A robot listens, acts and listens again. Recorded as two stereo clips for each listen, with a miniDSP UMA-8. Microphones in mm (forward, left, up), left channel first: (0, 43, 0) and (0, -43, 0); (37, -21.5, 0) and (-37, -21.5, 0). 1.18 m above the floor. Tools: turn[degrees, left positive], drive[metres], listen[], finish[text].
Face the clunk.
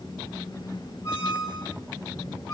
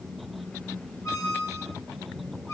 Action: listen[]
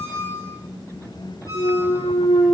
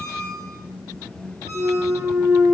Thought: The clunk: 110° left.
Action: turn[110]
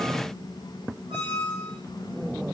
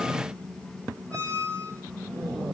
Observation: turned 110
Action: finish[I heard a clunk from this way, but can't make it out now.]